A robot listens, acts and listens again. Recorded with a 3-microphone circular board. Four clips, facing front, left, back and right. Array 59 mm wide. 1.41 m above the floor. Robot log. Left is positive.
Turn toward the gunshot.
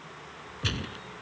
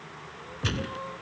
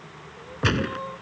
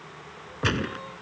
note: The gunshot: 145° right.
cmd yaw -145
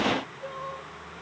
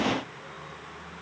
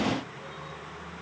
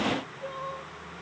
end: Facing where the gunshot came from. I can't hear it now.